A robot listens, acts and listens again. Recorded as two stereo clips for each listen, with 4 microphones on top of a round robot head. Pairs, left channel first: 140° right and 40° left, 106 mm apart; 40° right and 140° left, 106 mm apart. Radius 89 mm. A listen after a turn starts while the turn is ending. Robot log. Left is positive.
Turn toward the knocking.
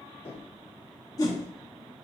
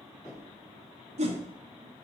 note: The knocking: 105° right.
cmd yaw -105
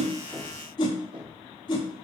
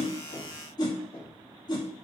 end: Found it: knocking, straight ahead, 2 to 4 m away.